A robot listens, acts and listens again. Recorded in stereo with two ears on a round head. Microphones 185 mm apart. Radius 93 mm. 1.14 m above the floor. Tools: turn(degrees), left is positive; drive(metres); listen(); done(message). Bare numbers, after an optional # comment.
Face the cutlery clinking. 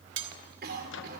# The cutlery clinking: about 60° right or 120° right.
turn(-60)
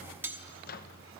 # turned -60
# So it is at 10° right.
turn(-10)
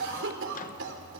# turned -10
done("Found it: cutlery clinking, straight ahead.")